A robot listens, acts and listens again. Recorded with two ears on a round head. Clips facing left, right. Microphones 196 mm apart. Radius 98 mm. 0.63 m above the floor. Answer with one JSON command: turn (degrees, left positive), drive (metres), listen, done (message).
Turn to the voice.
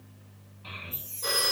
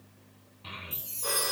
{"turn": -45}
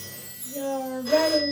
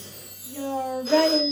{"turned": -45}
{"turn": -90}
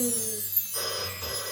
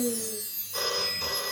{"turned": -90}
{"listen": true}
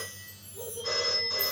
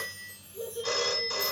{"turn": -25}
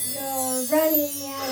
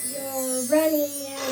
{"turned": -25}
{"turn": -15}
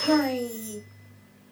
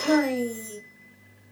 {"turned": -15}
{"done": "Found it: a child speaking, straight ahead."}